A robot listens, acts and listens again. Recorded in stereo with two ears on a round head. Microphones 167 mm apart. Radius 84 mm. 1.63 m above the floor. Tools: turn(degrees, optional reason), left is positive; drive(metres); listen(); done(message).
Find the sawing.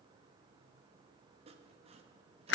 turn(degrees=-35, reason="The sawing: about 35° right or 145° right.")
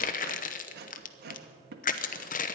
turn(degrees=-105, reason="So it is at 105° right.")
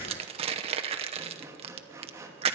turn(degrees=-15, reason="The sawing is now 15° right.")
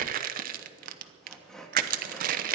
done("Found it: sawing, straight ahead.")